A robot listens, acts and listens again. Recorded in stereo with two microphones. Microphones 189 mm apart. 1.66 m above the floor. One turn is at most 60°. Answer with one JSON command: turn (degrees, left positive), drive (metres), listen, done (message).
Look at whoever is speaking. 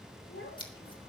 {"turn": 60}
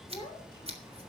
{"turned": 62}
{"turn": 25}
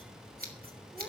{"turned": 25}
{"listen": true}
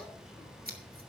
{"listen": true}
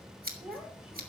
{"done": "Found it: a child speaking, straight ahead, over 4 m away."}